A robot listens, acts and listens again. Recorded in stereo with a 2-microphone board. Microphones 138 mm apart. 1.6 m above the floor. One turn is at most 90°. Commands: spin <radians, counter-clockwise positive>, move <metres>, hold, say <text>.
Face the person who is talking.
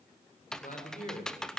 spin 1.22
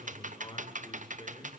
spin 0.70
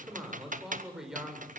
say Facing the man speaking, over 4 m away.